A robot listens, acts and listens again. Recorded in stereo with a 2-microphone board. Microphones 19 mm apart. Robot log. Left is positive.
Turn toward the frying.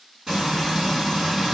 note: The frying: about 15° right or 165° right.
cmd yaw -15
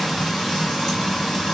end: Facing the frying.